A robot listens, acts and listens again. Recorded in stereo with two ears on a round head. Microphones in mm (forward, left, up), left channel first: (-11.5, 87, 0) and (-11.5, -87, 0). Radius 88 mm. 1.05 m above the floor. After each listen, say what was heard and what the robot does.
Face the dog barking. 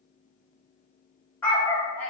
Turn 30° left.
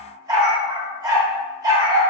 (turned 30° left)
So it is at 20° right. Turn 20° right.
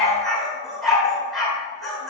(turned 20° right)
Facing the dog barking.